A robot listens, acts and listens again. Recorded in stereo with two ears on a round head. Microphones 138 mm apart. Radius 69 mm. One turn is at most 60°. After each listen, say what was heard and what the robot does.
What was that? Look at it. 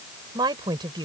The woman speaking: about 30° right or 150° right. Turn 30° right.
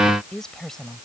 Facing the woman speaking.